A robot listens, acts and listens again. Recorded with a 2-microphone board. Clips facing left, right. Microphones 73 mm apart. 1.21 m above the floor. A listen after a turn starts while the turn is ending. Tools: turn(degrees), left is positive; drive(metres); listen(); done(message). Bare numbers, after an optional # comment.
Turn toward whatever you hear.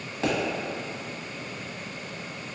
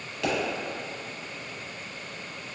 # The pop: about 30° left or 150° left.
turn(30)
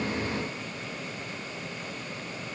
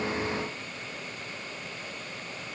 listen()
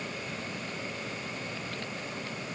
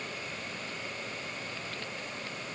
done("I heard a pop, but can't make it out now. It was about straight ahead or 120° left.")